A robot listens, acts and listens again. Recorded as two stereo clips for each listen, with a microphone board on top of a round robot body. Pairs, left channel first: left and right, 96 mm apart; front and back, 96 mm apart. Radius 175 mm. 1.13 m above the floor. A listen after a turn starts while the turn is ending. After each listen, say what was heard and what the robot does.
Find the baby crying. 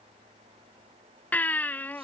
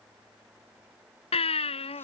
The baby crying: 20° left. Turn 20° left.
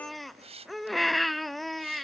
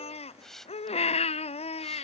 Found it: a baby crying, straight ahead.